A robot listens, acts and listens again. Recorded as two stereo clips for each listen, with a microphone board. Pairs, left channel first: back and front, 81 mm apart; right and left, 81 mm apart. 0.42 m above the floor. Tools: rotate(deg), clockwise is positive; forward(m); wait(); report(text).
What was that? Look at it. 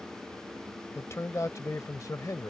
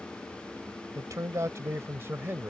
rotate(-150)
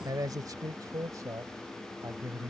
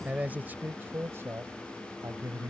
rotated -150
rotate(-50)
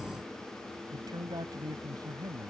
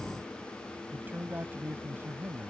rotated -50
rotate(-30)
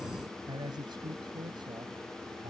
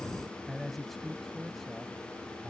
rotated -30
report("Found it: a man speaking, straight ahead.")